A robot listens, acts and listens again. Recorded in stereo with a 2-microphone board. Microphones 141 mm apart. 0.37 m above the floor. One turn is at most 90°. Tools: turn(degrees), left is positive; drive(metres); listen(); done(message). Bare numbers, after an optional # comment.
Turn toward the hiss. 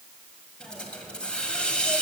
turn(30)
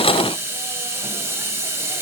# So it is at 20° right.
turn(-20)
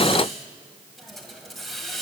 done("Facing the hiss, 1 to 2 m away.")